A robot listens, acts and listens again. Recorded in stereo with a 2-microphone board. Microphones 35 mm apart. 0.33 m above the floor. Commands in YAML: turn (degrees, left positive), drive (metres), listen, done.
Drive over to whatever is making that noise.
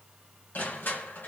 turn: 60
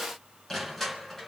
drive: 1.0
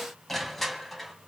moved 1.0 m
drive: 1.0
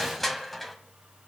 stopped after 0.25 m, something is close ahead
done: "I am next to the crushing."